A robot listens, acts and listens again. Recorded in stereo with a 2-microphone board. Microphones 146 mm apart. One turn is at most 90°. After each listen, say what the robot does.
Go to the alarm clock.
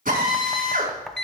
Turn 30° left.
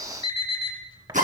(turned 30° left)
Turn 90° left.
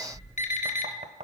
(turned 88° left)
Turn 65° left.
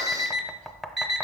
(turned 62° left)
Drive 1.0 m forward.
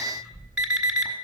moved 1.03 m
Drive 1.0 m forward.
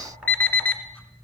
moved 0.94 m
Turn 15° left.
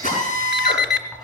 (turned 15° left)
Drive 1.0 m forward.
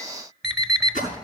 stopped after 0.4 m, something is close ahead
I am next to the alarm clock.